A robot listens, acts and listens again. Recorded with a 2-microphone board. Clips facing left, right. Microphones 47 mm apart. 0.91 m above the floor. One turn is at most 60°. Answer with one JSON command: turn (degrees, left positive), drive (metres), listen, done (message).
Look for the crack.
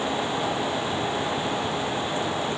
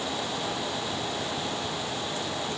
{"listen": true}
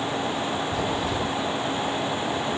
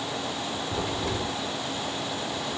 {"turn": -60}
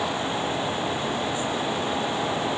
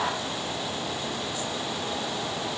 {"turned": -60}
{"turn": -30}
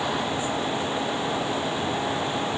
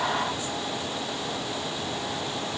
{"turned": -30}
{"done": "I heard a crack from this way, but can't make it out now."}